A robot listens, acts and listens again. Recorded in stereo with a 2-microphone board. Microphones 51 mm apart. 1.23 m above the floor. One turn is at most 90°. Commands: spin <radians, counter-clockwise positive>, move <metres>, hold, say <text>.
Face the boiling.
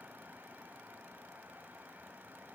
hold
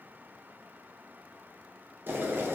spin -0.79
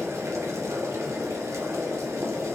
spin -1.57
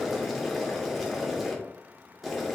say Facing the boiling, under 1 m away.